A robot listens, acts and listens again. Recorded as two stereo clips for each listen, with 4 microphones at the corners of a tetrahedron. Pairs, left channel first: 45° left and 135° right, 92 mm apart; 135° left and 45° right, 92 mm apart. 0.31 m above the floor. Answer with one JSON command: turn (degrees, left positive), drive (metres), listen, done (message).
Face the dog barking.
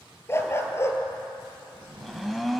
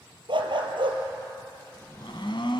{"turn": -15}
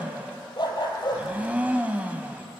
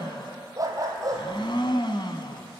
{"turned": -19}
{"done": "Facing the dog barking, 2 to 4 m away."}